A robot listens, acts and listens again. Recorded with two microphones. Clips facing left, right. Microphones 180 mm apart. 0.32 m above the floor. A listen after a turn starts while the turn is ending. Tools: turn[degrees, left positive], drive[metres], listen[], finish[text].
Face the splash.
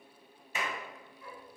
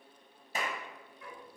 Action: listen[]
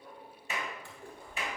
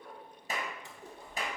Thought: The splash: about 20° right or 160° right.
Action: turn[-20]
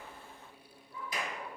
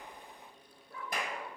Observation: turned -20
Action: listen[]
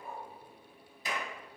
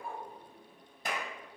Action: finish[I heard a splash, but can't make it out now. It was about straight ahead or 140° right.]